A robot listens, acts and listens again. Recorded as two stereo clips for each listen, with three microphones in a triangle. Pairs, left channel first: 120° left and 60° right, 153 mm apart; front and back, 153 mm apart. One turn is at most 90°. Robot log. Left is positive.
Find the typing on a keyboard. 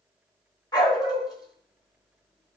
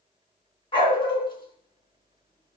cmd idle
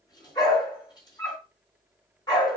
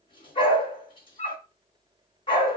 cmd idle
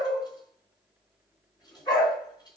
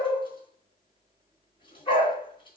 end: I can't make out typing on a keyboard, only a dog barking.